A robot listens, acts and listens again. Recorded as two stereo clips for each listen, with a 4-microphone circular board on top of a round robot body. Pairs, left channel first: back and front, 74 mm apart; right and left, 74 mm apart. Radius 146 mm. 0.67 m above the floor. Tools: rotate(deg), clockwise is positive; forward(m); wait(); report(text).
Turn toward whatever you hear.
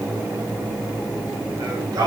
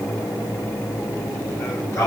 rotate(40)
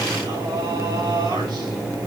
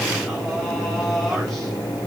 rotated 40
report("Found it: singing, straight ahead, over 4 m away.")